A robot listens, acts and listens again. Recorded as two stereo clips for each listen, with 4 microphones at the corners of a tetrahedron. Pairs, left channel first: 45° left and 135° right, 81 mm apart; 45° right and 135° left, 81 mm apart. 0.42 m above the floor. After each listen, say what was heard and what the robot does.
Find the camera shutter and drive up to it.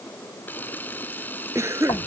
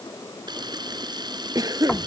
The camera shutter: 110° left. Turn 110° left.
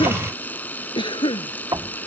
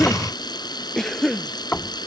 The camera shutter is now 25° right. Turn 25° right.
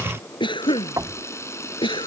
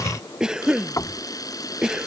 The camera shutter is now 10° right. Turn 10° right.
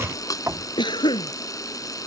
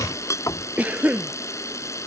Drive 1.0 m forward.
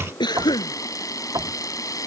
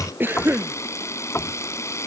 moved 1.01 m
Drive 1.0 m forward.
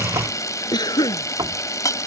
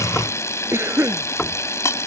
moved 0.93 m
Drive 1.0 m forward.
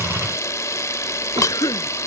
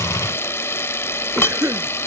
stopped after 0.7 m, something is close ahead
Arrived at the camera shutter, straight ahead.